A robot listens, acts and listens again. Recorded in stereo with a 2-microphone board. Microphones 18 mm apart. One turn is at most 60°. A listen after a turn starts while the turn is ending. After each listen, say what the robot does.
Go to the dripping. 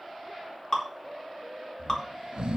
Turn 35° left.
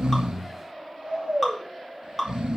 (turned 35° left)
Drive 1.0 m forward.
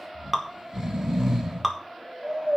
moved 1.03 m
Drive 1.0 m forward.
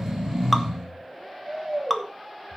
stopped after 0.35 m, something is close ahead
I am next to the dripping.